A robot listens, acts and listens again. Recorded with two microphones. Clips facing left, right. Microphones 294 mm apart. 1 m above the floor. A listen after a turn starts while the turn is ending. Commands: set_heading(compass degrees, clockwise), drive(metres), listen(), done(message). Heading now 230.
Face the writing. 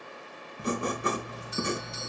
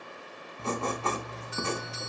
set_heading(210)
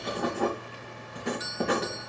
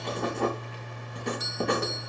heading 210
done("Found it: writing, straight ahead, 2 to 4 m away.")